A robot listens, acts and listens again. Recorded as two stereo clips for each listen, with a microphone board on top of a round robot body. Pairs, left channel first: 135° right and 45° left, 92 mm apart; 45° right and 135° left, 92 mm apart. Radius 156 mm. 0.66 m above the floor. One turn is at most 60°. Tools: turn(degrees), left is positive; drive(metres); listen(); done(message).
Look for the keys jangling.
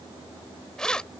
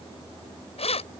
turn(degrees=-55)
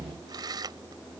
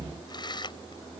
done("Found it: keys jangling, straight ahead.")